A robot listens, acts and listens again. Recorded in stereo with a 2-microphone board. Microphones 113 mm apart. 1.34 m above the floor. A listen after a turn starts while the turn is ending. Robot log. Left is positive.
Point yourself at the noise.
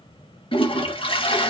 note: The toilet flushing: about 45° left or 135° left.
cmd yaw +45
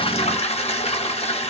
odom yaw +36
note: So it is at 85° left.
cmd yaw +85
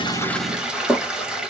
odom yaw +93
end: Facing the toilet flushing.